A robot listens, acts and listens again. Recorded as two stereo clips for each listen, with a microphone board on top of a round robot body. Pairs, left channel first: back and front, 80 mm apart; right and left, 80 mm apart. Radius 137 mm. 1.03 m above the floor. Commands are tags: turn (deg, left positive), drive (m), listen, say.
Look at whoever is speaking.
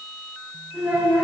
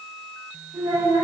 <turn deg="65"/>
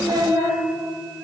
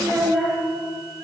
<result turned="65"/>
<say>Facing the child speaking, 1 to 2 m away.</say>